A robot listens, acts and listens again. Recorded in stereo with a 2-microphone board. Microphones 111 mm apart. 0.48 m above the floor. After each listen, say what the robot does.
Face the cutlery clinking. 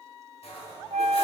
Turn 70° left.
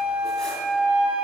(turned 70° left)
Keep listening.
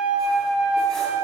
Keep listening.
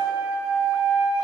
I heard cutlery clinking, but can't make it out now. It was about straight ahead or 40° left.